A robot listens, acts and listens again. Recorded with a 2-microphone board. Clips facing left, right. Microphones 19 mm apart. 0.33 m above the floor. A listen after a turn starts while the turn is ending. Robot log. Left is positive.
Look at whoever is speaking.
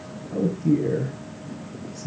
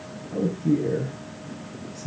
note: The man speaking: about 20° left or 160° left.
cmd yaw +20
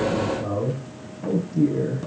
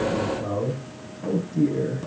end: Facing the man speaking, over 4 m away.